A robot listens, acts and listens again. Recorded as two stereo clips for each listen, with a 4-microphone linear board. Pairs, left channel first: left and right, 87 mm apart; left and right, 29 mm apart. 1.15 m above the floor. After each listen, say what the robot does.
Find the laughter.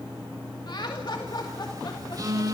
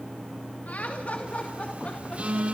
Turn 55° left.
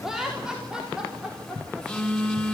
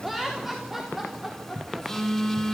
Turn 10° right.
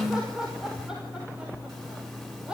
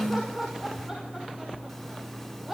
Turn 10° right.
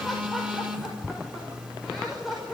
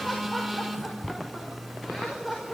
Facing the laughter, over 4 m away.